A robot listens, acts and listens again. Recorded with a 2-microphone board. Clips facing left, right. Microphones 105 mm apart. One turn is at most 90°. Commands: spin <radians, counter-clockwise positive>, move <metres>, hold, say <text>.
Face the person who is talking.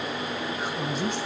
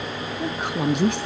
spin -1.13
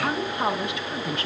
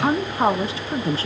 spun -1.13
spin -0.61
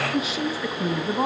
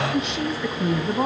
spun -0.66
say Found it: a woman speaking, straight ahead.